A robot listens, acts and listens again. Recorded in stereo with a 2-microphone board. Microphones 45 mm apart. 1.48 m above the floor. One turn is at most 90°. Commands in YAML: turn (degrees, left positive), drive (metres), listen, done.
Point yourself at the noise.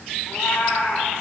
turn: 65
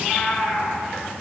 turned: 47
turn: 50
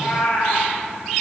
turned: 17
turn: 45
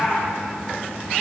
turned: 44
done: "Found it: a cat meowing, straight ahead, over 4 m away."